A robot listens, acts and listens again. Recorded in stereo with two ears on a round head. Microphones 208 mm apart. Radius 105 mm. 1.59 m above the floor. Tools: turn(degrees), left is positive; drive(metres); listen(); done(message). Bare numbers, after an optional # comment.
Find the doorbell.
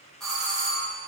turn(30)
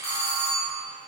# So it is at 150° left.
turn(150)
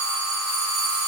# The doorbell is now 20° left.
turn(20)
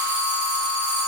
done("Facing the doorbell, 1 to 2 m away.")